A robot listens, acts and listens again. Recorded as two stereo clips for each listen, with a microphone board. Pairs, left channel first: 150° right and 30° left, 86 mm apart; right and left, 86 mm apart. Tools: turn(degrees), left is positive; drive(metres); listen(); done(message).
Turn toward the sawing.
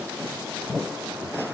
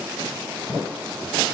listen()
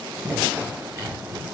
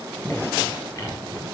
turn(degrees=-30)
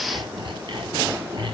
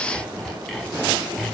done("Found it: sawing, straight ahead, over 4 m away.")